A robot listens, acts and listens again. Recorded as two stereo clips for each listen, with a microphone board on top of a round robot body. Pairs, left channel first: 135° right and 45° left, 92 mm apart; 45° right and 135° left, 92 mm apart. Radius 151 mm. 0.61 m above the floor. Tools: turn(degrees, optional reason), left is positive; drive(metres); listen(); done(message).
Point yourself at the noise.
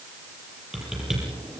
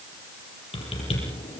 turn(degrees=-40, reason="The typing on a keyboard: 40° right.")
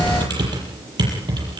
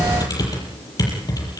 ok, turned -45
done("Facing the typing on a keyboard.")